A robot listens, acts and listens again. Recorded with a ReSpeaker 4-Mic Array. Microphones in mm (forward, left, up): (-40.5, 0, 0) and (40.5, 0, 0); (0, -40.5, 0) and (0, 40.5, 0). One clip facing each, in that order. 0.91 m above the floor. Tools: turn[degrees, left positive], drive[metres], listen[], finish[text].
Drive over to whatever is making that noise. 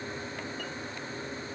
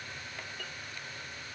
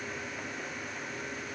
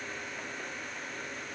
Action: listen[]
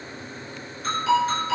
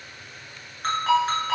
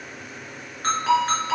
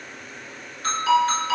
Thought: The ringtone: 35° right.
Action: turn[-35]
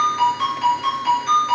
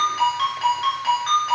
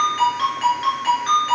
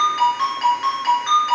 Thought: The ringtone is now 10° left.
Action: turn[10]
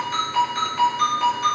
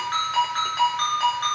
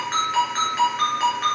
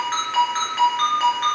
Action: drive[1.0]
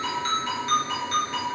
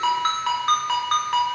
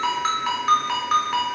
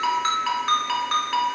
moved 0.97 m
Action: drive[1.0]
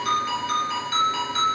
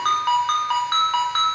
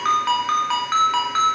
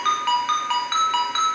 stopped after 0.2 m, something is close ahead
Action: finish[Arrived at the ringtone, straight ahead.]